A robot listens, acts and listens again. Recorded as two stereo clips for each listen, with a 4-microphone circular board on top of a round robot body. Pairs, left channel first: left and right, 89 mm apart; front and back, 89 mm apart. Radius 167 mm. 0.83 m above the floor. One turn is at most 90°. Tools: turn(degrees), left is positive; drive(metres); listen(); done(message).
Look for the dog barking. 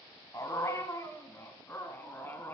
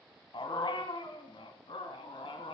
turn(degrees=20)
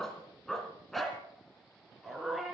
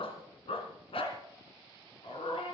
done("Facing the dog barking, 2 to 4 m away.")